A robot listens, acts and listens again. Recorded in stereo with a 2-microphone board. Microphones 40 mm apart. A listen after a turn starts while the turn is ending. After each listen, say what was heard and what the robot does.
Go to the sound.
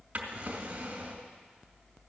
The drawer: about 30° right or 150° right. Turn 30° right.
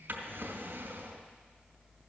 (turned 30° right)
So it is at 120° right. Turn 120° right.
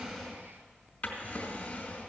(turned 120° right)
The drawer is now 30° left. Turn 30° left.
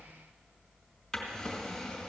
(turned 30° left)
The drawer is now 10° left. Turn 10° left.
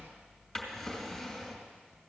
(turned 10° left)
Drive 1.0 m forward.
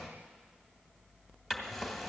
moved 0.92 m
Drive 1.0 m forward.
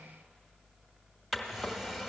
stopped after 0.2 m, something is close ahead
I am next to the drawer.